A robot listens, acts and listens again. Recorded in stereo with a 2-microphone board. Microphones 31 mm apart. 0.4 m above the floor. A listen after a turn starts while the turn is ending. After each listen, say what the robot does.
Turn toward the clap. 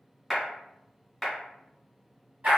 Turn 30° right.
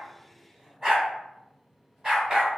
Keep listening.
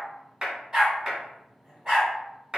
Turn 140° right.
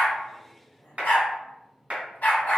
Turn 50° right.
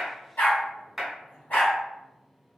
Found it: a clap, straight ahead, 1 to 2 m away.